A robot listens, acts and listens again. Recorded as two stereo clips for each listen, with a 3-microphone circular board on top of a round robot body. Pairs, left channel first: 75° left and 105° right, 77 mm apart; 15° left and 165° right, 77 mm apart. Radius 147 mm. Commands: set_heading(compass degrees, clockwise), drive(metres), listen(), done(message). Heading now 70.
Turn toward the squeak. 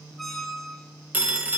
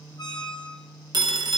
set_heading(85)
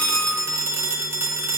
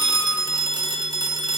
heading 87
listen()
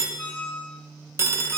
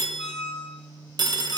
done("Found it: a squeak, straight ahead, 1 to 2 m away.")